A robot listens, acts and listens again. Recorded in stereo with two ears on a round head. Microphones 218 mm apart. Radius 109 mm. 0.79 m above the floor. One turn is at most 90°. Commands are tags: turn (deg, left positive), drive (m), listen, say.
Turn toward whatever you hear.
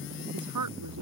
<turn deg="-90"/>
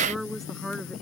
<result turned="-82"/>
<say>Found it: a woman speaking, straight ahead.</say>